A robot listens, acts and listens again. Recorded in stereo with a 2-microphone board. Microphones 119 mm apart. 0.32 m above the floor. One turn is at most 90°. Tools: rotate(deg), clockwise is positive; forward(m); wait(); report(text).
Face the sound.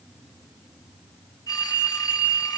rotate(-30)
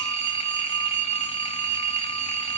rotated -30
rotate(-90)
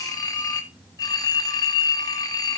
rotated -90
rotate(-35)
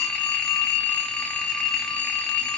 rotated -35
rotate(-10)
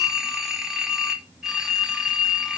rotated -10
report("Found it: a phone ringing, straight ahead, 1 to 2 m away.")